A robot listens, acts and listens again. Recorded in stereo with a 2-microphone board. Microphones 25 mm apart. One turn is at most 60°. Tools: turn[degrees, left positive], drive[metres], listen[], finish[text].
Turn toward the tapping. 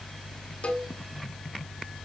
Action: listen[]
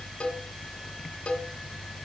Action: listen[]
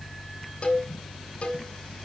Action: finish[I can't make out tapping, only a cowbell.]